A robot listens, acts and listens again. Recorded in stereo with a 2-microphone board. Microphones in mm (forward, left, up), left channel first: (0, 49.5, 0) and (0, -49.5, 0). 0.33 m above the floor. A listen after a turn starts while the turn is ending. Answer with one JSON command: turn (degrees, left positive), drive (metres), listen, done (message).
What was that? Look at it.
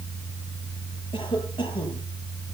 {"turn": 55}
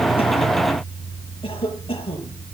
{"turn": 70}
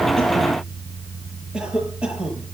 {"turn": -10}
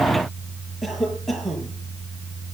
{"done": "Found it: a cough, straight ahead, over 4 m away."}